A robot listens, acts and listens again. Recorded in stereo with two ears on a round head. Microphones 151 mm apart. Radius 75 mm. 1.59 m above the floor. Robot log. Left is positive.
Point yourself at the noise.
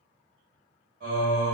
note: The singing: about 55° right or 125° right.
cmd yaw -55
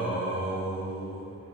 end: Found it: singing, straight ahead.